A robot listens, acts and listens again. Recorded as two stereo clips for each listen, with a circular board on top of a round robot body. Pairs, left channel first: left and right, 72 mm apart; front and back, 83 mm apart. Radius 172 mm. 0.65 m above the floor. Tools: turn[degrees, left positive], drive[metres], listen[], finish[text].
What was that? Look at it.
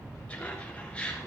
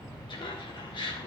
Thought: The laughter: 15° left.
Action: turn[15]
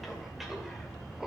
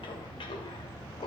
Action: finish[Found it: laughter, straight ahead.]